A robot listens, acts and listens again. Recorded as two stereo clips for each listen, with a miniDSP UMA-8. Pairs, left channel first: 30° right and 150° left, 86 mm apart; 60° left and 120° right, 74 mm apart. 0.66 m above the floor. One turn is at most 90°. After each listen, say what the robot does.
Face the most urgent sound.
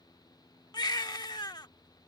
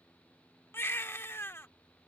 Found it: a baby crying, straight ahead.